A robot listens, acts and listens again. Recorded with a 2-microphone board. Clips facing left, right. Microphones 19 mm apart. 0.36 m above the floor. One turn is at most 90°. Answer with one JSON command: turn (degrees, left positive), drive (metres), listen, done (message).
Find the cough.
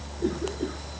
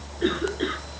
{"turn": -60}
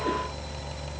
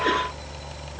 {"listen": true}
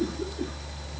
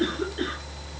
{"turn": -55}
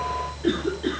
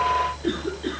{"turn": 10}
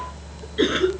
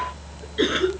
{"done": "Facing the cough."}